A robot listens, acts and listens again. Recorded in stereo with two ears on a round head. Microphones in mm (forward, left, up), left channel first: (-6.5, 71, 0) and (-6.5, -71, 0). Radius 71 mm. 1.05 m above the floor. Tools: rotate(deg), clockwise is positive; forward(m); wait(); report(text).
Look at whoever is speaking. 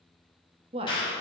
rotate(35)
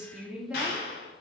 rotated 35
report("Facing the woman speaking.")